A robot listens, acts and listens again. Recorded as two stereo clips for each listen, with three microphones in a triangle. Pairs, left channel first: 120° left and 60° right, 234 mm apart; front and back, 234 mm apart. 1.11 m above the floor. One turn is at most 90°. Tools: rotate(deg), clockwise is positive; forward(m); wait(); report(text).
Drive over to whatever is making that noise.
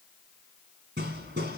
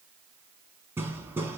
rotate(90)
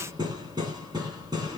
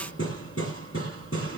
rotate(-10)
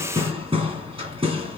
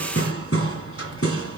forward(1.0)
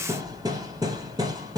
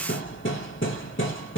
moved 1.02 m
rotate(-10)
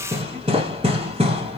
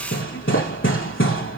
forward(1.0)
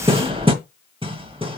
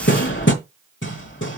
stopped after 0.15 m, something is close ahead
report("I am next to the hammering.")